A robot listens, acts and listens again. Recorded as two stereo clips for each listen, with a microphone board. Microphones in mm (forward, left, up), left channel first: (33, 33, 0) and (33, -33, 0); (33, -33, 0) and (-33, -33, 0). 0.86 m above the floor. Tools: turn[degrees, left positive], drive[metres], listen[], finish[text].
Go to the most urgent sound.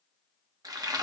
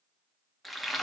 Action: listen[]
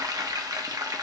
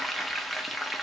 Action: listen[]
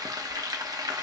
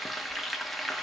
Action: finish[I can't make out anything urgent to turn to.]